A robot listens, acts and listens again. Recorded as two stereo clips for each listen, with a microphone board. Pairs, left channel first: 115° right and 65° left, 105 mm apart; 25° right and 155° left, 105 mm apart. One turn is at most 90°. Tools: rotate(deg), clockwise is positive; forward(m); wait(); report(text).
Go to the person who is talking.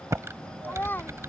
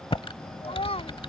rotate(40)
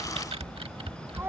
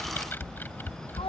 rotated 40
wait()
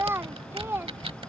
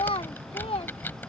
forward(1.0)
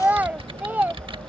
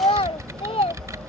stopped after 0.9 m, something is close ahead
report("I am next to the child speaking.")